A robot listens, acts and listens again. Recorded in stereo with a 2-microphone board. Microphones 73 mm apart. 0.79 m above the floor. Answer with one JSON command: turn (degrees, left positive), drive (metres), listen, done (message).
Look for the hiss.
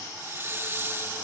{"turn": -30}
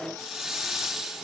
{"done": "Found it: a hiss, straight ahead."}